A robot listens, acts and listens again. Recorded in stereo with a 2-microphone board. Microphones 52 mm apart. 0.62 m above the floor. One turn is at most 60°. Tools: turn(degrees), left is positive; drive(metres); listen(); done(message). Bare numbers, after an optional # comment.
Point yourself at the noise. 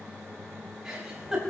turn(-30)
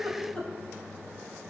# So it is at 20° left.
turn(20)
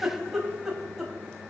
done("Facing the giggle, 2 to 4 m away.")